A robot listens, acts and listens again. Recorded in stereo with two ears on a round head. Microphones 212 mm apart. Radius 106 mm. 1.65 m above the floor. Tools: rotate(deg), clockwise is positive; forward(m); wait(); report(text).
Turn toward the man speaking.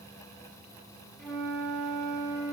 wait()
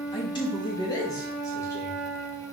rotate(-30)
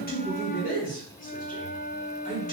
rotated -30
rotate(-150)
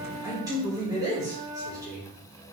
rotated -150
rotate(15)
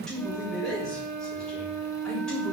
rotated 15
report("Facing the man speaking, 2 to 4 m away.")